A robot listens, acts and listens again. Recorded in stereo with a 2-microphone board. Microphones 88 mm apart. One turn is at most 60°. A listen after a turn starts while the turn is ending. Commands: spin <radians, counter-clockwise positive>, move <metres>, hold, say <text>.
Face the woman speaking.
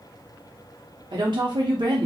spin -1.05
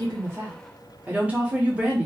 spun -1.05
spin -0.35
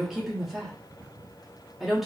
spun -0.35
say Found it: a woman speaking, straight ahead, under 1 m away.